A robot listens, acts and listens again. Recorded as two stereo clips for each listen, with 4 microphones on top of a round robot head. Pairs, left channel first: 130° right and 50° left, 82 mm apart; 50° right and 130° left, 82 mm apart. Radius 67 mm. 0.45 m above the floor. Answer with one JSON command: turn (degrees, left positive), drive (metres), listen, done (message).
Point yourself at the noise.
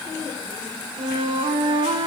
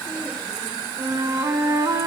{"turn": 75}
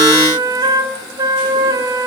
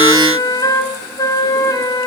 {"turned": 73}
{"done": "Found it: a flute, straight ahead, 1 to 2 m away."}